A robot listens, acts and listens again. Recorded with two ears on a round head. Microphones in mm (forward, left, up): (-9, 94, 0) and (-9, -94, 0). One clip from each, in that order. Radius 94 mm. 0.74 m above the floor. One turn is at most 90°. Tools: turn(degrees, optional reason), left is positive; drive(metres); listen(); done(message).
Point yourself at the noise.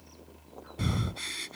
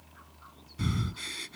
turn(degrees=30)
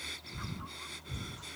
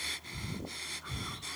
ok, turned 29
turn(degrees=-20, reason="So it is at 20° right.")
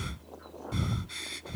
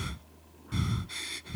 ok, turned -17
done("Facing the breathing.")